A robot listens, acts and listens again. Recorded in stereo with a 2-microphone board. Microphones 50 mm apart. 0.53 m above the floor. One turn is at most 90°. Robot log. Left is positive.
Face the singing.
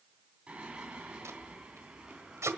note: The singing: about 20° right or 160° right.
cmd yaw -20
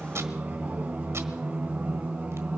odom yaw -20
note: The singing: about 30° right or 150° right.
cmd yaw -30
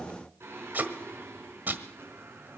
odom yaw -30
note: So it is at 125° right.
cmd yaw -90
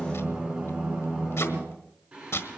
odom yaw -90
note: The singing is now 20° right.
cmd yaw -20
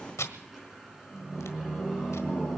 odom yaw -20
end: Found it: singing, straight ahead, over 4 m away.